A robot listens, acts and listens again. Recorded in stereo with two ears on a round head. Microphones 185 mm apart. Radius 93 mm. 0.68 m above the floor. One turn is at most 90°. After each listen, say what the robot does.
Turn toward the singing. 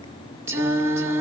Turn 30° right.
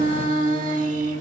Turn 90° right.
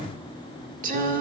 Turn 50° right.
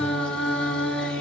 Facing the singing, 1 to 2 m away.